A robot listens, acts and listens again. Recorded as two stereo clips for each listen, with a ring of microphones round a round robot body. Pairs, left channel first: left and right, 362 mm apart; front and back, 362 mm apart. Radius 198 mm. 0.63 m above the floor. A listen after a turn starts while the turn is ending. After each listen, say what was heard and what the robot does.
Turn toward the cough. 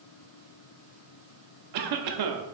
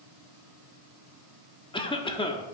The cough: 75° right. Turn 75° right.
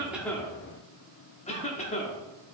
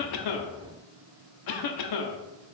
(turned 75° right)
The cough is now 20° left. Turn 20° left.
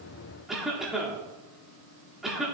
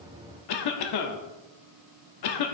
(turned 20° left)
Found it: a cough, straight ahead.